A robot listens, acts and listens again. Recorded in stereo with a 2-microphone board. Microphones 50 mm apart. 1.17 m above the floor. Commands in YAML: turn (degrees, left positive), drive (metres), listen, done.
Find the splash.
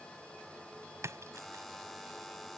turn: -90
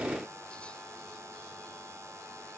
done: "I heard a splash from this way, but can't make it out now."